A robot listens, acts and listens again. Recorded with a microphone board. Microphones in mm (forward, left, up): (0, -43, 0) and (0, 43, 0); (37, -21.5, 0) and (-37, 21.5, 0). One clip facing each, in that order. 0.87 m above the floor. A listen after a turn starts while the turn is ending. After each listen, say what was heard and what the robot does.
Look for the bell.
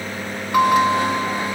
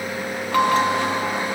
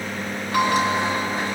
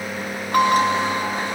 The bell: 165° right. Turn 165° right.
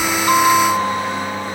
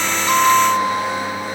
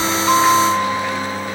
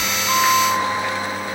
The bell is now 20° right. Turn 20° right.
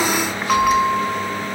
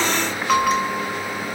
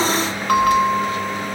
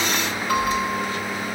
Found it: a bell, straight ahead.